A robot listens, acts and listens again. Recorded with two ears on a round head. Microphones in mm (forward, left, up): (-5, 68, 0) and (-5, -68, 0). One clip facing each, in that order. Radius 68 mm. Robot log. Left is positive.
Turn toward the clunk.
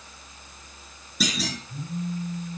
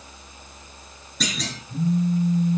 cmd yaw +30
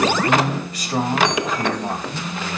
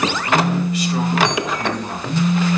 cmd idle
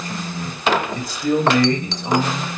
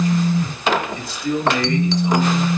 end: I heard a clunk, but can't make it out now. It was about 25° right or 145° left.